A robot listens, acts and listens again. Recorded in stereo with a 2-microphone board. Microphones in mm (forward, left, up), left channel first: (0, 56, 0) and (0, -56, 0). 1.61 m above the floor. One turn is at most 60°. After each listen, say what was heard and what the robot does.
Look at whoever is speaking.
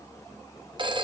Keep listening.
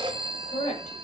Turn 60° left.
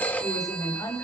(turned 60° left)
So it is at 30° left. Turn 30° left.
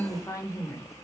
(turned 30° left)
The woman speaking is now 30° left. Turn 30° left.
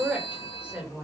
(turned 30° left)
The woman speaking is now 10° right. Turn 10° right.
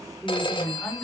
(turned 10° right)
Facing the woman speaking, over 4 m away.